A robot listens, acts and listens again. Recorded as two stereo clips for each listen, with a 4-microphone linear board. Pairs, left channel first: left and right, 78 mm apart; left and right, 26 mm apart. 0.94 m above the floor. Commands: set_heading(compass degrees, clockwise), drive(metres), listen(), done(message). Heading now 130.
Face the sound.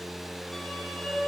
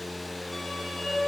set_heading(100)
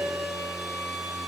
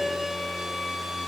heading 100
set_heading(125)
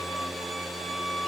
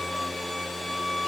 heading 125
done("Found it: a violin, straight ahead, 2 to 4 m away.")